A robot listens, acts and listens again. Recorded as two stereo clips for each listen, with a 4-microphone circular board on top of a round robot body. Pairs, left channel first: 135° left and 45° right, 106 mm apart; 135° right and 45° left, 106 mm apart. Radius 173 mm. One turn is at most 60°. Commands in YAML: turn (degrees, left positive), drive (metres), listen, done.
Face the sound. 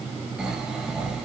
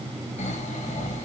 turn: -60
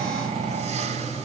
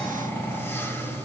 turn: -60
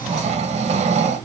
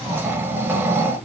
turn: -25
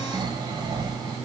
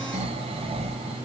turn: 10
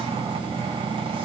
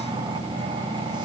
done: "Facing the snoring, under 1 m away."